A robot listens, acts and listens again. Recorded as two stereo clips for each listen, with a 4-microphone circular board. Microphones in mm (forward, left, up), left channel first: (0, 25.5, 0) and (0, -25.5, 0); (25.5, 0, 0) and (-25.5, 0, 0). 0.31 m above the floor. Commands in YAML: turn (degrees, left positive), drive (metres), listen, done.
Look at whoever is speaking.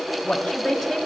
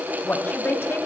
done: "Facing the woman speaking, 1 to 2 m away."